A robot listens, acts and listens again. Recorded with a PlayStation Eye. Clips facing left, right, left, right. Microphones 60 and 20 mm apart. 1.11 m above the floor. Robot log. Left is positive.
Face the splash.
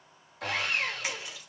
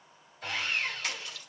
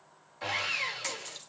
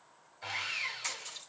note: The splash: about 15° left or 165° left.
cmd yaw +15
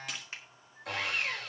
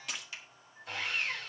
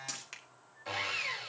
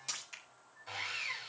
end: Found it: a splash, straight ahead.